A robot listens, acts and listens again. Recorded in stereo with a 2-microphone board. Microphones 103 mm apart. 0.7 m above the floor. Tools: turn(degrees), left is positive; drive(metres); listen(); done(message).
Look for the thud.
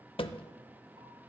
turn(degrees=55)
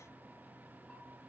listen()
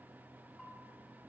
done("I heard a thud, but can't make it out now. It was about straight ahead or 70° left.")